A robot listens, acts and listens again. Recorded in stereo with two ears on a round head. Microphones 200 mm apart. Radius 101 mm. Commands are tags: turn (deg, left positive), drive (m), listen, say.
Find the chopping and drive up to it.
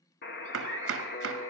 <turn deg="-60"/>
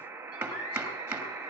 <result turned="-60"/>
<turn deg="-10"/>
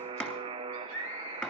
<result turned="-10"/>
<drive m="1.0"/>
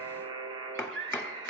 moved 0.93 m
<turn deg="10"/>
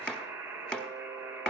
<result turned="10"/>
<drive m="1.0"/>
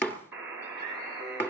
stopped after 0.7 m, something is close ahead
<turn deg="10"/>
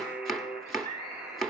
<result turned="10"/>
<say>Arrived at the chopping, straight ahead.</say>